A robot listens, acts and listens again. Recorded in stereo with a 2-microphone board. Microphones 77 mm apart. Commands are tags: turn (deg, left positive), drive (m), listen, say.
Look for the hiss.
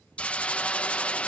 <turn deg="15"/>
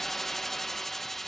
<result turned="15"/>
<say>Facing the hiss.</say>